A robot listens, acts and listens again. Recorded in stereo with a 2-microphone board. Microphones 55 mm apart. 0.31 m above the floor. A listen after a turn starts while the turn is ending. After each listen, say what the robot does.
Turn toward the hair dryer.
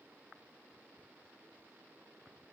Keep listening.
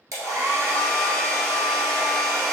Turn 70° right.
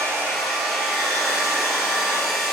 Facing the hair dryer.